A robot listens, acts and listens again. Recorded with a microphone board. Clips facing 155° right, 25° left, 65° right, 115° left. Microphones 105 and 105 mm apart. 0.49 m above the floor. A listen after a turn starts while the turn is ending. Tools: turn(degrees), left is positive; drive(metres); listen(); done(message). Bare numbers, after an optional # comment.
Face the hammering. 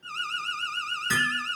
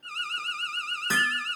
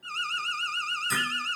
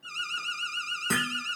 # The hammering: 80° left.
turn(80)
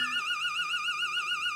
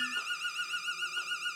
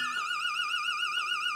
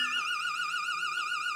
listen()
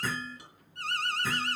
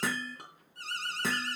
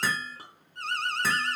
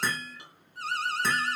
# The hammering is now 15° left.
turn(15)
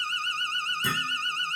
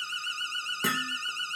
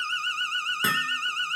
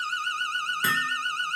done("Found it: hammering, straight ahead.")